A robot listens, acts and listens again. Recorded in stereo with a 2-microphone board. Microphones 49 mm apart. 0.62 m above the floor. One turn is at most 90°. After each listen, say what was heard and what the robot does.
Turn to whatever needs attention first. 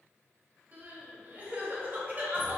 The crying: about 40° right or 140° right. Turn 40° right.
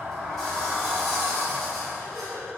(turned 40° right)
So it is at 100° right. Turn 90° right.
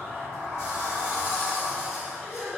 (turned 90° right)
Found it: crying, straight ahead.